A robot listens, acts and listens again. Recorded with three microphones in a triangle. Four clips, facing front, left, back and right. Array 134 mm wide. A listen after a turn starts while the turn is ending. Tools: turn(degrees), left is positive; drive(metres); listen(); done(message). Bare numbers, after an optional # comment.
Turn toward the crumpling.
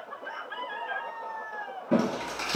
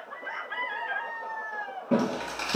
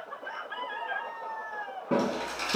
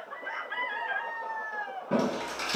# The crumpling: 85° left.
turn(85)
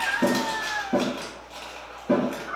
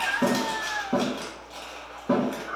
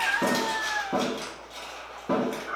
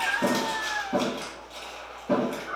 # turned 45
# The crumpling is now 40° left.
turn(40)
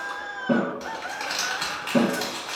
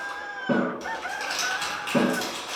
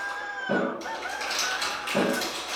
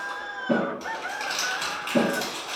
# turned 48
# The crumpling is now 10° right.
turn(-10)
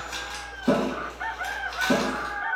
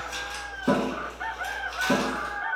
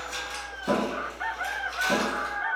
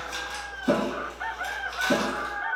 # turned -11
done("Facing the crumpling.")